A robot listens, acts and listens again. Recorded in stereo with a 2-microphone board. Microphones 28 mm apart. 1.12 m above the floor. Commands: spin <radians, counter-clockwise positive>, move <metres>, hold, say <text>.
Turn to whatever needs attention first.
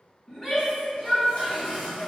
spin 0.52
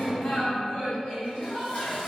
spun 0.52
spin 2.36
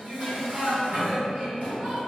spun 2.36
spin -0.52
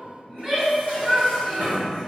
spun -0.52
spin -0.35
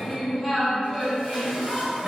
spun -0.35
say Found it: a shout, straight ahead.